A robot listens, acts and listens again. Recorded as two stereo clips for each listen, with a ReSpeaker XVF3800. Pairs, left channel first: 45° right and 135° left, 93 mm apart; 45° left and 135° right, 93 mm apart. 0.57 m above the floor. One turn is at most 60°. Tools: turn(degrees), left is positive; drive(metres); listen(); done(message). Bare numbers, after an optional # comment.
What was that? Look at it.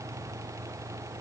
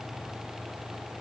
listen()
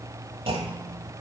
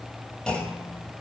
# The clunk: 125° left.
turn(60)
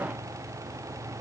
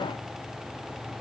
# Nothing new. It was at 65° left.
turn(60)
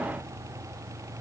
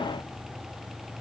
done("Facing where the clunk came from. I can't hear it now.")